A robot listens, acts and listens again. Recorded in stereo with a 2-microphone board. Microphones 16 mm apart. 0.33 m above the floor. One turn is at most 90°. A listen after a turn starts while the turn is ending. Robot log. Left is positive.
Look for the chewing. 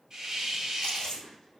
cmd yaw +90
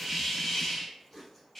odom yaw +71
note: So it is at 10° left.
cmd yaw +10
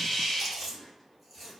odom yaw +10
end: Found it: chewing, straight ahead, 1 to 2 m away.